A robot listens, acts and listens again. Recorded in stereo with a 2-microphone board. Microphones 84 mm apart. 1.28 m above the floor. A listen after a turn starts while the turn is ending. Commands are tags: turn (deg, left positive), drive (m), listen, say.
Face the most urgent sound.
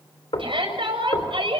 <turn deg="-90"/>
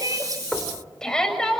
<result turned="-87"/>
<say>Found it: a shout, straight ahead, over 4 m away.</say>